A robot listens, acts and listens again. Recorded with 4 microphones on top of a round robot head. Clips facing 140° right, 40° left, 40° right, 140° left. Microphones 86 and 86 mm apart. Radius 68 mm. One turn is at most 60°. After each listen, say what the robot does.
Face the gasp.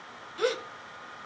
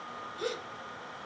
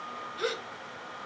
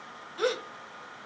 Turn 60° right.
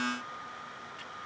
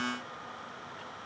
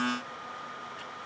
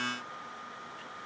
Turn 60° right.
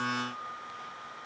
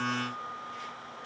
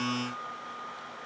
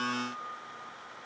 Turn 50° right.
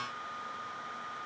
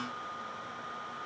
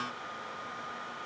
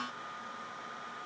I heard a gasp from this way, but can't make it out now.